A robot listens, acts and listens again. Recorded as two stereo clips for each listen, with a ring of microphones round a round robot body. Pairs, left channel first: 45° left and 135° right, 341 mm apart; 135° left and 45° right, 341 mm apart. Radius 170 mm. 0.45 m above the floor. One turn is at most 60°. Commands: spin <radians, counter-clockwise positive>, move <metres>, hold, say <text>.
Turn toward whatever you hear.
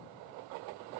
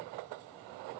hold
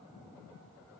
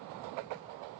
hold
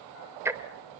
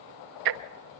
spin -0.96
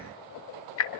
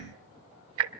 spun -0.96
say Found it: ticking, straight ahead, under 1 m away.